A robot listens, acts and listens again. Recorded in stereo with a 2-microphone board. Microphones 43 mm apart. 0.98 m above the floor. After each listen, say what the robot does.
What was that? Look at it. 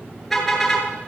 Turn 30° left.
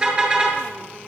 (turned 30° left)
Turn 25° right.
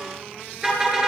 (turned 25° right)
Turn 15° right.
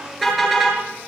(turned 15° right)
Found it: a car horn, straight ahead, over 4 m away.